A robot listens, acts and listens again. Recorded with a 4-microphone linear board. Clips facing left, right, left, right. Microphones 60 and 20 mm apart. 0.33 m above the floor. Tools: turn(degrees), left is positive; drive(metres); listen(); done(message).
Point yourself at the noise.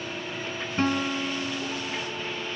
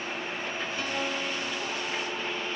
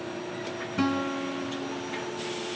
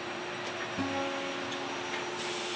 turn(degrees=40)
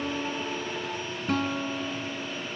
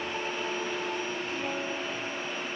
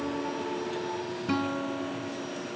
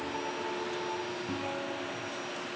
turn(degrees=95)
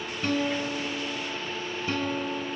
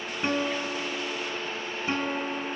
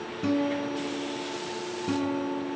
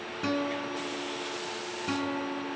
turn(degrees=-25)
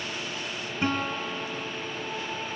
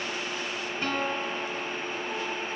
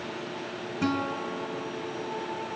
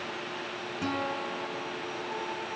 turn(degrees=20)
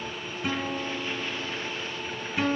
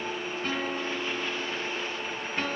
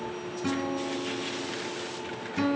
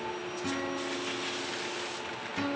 turn(degrees=10)
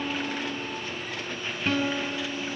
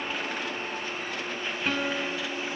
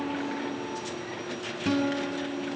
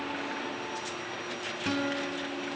done("Facing the guitar, over 4 m away.")